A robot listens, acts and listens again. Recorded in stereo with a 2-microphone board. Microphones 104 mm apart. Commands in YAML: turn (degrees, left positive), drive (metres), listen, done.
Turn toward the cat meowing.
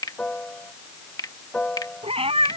turn: -90
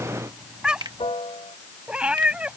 turn: -10
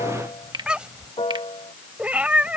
turn: -15
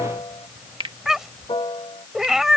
done: "Found it: a cat meowing, straight ahead."